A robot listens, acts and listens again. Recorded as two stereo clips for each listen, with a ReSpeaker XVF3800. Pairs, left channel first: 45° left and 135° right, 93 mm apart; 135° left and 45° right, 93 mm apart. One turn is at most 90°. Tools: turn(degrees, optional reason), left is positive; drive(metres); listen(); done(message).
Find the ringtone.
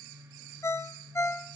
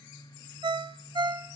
turn(degrees=-15, reason="The ringtone: 15° right.")
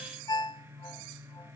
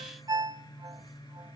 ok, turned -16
done("Facing the ringtone, under 1 m away.")